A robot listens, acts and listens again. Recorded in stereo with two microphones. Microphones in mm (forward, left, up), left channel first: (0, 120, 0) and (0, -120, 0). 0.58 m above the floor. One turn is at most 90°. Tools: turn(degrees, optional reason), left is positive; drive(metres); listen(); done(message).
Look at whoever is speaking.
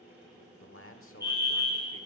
turn(degrees=65, reason="The man speaking: about 65° left or 115° left.")
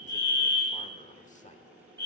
listen()
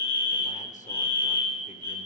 listen()
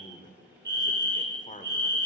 turn(degrees=35, reason="So it is at 35° left.")
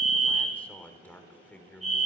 done("Found it: a man speaking, straight ahead.")